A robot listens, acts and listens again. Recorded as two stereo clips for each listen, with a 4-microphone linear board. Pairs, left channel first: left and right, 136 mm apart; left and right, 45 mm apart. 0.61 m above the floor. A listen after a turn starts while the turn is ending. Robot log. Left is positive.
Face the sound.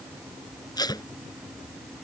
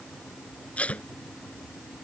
note: The tape being pulled: about 30° left or 150° left.
cmd yaw +30
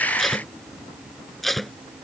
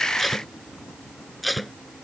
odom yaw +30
end: Found it: tape being pulled, straight ahead.